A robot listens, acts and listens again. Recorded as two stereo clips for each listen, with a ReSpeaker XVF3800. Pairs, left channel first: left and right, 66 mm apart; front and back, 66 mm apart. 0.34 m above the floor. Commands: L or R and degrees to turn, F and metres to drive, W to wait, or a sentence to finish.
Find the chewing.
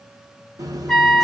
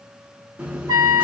R110
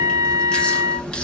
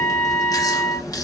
L15
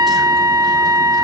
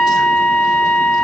W
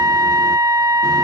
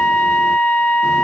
W
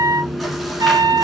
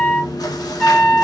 Facing the chewing, under 1 m away.